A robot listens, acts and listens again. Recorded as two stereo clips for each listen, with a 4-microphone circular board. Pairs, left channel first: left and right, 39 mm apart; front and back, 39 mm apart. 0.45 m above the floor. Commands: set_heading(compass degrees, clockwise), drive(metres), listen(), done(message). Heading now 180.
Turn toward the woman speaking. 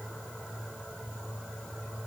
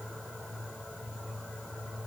listen()
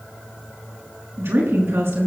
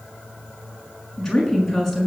set_heading(260)
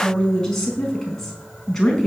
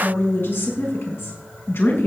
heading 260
done("Facing the woman speaking, over 4 m away.")